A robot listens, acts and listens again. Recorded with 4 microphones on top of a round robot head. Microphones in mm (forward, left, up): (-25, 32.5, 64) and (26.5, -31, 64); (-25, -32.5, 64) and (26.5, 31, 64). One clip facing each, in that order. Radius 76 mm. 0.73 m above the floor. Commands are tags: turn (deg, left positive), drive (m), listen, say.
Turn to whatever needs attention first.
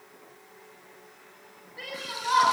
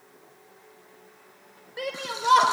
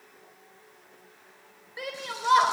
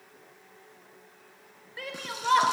<turn deg="-55"/>
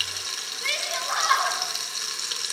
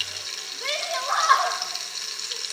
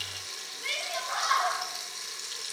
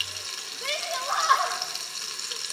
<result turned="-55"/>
<turn deg="10"/>
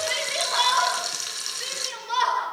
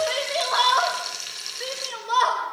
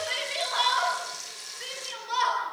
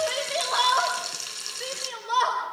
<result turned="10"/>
<say>Facing the shout.</say>